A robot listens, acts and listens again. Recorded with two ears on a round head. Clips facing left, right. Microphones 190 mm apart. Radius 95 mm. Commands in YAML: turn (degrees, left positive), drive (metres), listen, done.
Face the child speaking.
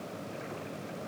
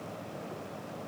listen: true
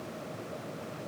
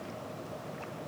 listen: true
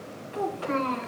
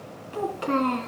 turn: -55
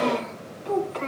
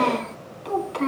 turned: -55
turn: -55
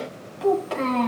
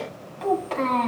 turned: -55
turn: 15
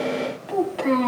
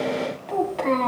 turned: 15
turn: 10
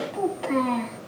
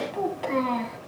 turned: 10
done: "Found it: a child speaking, straight ahead."